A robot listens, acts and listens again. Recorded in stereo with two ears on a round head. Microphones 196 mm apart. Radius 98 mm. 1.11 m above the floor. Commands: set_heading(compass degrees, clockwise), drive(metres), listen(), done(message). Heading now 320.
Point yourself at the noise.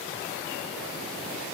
listen()
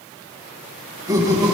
set_heading(340)
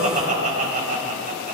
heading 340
set_heading(115)
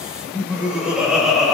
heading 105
done("Facing the laughter.")